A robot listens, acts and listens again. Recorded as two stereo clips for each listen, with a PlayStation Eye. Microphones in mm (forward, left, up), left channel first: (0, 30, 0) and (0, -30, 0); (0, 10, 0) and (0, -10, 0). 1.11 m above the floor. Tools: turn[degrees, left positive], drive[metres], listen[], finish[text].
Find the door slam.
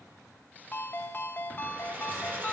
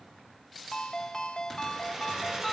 Action: listen[]
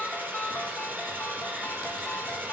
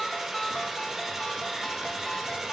Action: listen[]
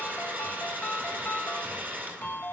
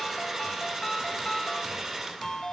Action: finish[I can't make out a door slam to turn to.]